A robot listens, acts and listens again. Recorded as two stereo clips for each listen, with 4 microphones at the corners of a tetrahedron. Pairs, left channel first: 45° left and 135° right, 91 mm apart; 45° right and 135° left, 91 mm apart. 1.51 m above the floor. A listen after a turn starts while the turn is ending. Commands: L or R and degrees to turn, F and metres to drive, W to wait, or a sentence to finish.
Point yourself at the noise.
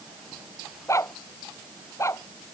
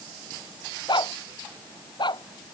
R15
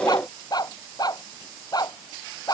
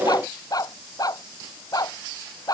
Facing the dog barking.